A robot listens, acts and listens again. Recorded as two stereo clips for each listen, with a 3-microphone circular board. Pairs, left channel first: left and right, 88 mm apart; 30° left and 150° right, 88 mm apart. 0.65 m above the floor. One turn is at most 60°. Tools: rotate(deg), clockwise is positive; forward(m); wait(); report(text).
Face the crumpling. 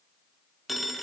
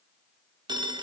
wait()
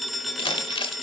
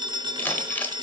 rotate(-60)
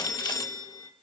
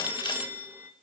rotate(-40)
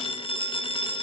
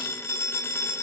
wait()
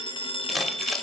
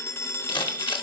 report("Facing the crumpling, under 1 m away.")